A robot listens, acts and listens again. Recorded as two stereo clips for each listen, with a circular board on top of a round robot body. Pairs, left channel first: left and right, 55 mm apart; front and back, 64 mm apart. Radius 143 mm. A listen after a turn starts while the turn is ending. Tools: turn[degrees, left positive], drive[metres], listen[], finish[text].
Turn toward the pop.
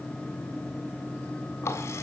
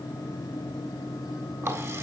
Action: listen[]
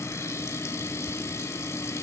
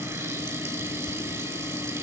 Action: listen[]
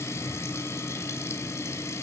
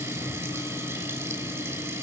Action: finish[I can't make out a pop to turn to.]